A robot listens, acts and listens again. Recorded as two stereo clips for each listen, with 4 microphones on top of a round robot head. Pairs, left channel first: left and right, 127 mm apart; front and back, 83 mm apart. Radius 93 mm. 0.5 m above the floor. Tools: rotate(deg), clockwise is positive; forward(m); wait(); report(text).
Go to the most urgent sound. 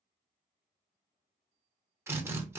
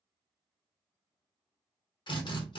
wait()
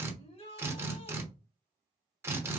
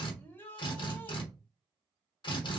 rotate(-65)
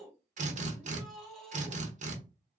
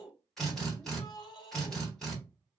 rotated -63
forward(1.0)
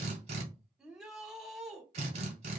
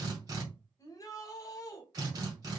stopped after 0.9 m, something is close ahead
report("I am next to the shout.")